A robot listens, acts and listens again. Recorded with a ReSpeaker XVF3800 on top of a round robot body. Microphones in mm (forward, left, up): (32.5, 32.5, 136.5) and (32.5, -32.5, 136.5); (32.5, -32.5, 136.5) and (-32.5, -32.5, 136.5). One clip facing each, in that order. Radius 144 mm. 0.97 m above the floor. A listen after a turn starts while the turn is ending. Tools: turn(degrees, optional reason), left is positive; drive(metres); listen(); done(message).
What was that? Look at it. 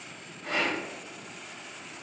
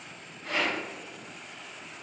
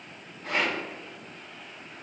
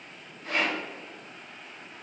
turn(degrees=65, reason="The rattle: 65° left.")
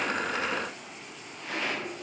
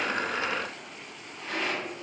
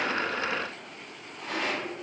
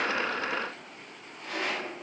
done("Facing the rattle.")